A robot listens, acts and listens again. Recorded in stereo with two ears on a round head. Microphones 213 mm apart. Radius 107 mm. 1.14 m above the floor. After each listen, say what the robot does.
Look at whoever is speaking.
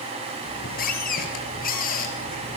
Keep listening.
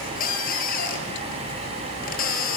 Keep listening.
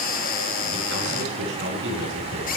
Turn 55° right.
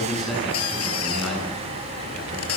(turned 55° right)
Facing the man speaking.